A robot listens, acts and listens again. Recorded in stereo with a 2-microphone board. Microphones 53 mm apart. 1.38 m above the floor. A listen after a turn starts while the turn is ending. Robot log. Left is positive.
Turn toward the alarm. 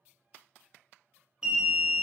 note: The alarm: about 15° right or 165° right.
cmd yaw -15
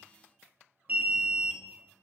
note: So it is at 150° right.
cmd yaw -150
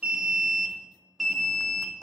end: Facing the alarm.